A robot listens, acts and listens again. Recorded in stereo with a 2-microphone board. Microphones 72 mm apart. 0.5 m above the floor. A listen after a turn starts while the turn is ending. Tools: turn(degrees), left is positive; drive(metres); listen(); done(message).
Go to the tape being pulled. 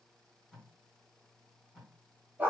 turn(degrees=30)
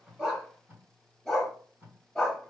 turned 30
turn(degrees=-30)
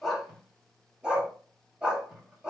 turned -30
turn(degrees=-10)
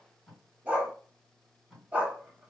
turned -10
drive(metres=1.0)
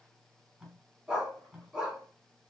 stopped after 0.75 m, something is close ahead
turn(degrees=-10)
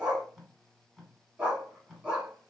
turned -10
done("I am next to the tape being pulled.")